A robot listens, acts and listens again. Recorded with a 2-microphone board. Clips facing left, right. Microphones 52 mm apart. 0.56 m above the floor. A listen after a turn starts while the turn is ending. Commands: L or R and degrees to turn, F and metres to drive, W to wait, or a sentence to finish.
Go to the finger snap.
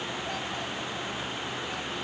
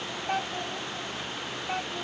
W
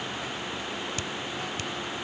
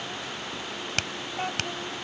R75
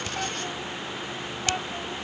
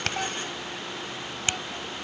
W
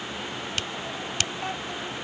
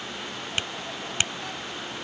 R25
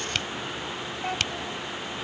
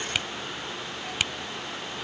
R10
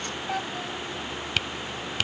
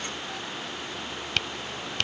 F1.0
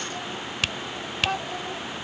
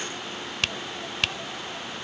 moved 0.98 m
F1.0
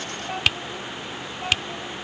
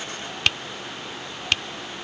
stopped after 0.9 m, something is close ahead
I am next to the finger snap.